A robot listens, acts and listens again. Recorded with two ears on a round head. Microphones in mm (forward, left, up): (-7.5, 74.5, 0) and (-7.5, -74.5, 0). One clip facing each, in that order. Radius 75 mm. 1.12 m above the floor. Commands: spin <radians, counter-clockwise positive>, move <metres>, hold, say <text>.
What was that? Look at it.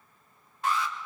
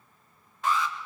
spin -1.13
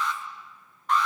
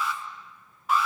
say Found it: an alarm, straight ahead.